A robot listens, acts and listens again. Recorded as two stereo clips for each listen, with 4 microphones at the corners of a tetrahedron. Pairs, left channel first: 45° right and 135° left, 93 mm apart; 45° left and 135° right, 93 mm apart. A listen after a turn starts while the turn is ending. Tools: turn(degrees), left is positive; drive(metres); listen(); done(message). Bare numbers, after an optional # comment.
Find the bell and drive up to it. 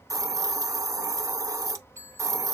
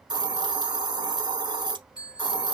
# The bell: 80° left.
turn(80)
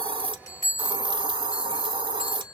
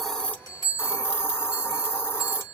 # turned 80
drive(1.0)
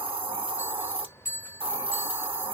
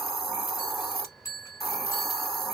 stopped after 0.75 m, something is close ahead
done("I am next to the bell.")